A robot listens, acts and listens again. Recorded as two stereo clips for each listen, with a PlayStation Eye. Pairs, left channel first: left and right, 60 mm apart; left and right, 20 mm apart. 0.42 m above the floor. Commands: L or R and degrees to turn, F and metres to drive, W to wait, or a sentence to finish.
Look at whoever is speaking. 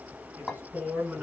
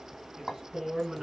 R30
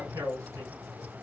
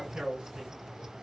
R120
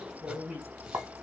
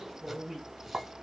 R20
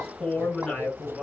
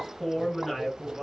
Facing the man speaking, 2 to 4 m away.